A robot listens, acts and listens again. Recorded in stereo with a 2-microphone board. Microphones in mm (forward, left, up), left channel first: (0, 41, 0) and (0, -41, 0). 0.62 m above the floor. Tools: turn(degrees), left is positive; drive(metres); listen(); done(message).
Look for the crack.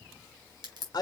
turn(degrees=-90)
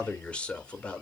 done("Facing where the crack came from. I can't hear it now.")